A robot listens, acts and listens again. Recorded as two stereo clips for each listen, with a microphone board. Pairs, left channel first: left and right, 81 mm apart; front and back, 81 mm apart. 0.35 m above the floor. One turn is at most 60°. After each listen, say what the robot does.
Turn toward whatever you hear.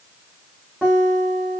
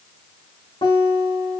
Turn 15° right.
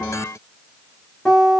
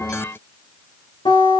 Found it: a guitar, straight ahead.